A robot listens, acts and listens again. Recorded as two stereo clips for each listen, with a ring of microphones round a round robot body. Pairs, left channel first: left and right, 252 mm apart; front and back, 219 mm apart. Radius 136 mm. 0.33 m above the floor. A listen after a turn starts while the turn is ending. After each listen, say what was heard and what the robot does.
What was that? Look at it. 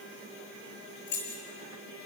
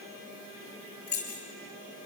The keys jangling: 40° left. Turn 40° left.
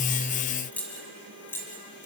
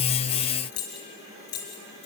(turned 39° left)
The keys jangling is now 10° left. Turn 10° left.
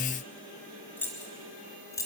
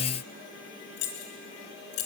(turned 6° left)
The keys jangling is now 10° left. Turn 10° left.
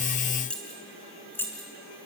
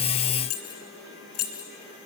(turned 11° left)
The keys jangling is now 10° left. Turn 10° left.
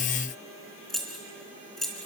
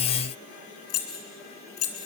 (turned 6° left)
Facing the keys jangling.